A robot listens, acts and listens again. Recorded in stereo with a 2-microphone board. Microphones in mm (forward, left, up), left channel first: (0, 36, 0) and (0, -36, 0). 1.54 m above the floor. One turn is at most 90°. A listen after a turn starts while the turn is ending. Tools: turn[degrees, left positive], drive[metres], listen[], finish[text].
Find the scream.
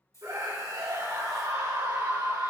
Thought: The scream: about 70° right or 110° right.
Action: turn[-70]
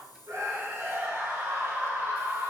Thought: So it is at 35° right.
Action: turn[-35]
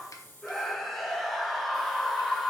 Action: finish[Facing the scream, 2 to 4 m away.]